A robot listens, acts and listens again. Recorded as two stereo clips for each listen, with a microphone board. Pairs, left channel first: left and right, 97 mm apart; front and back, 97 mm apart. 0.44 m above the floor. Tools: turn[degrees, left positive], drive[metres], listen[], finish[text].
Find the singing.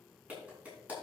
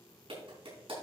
Action: listen[]
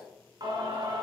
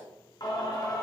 Thought: The singing: 50° right.
Action: turn[-50]
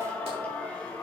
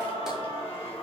Thought: The singing is now 10° left.
Action: turn[10]
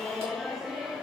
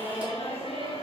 Action: finish[Facing the singing.]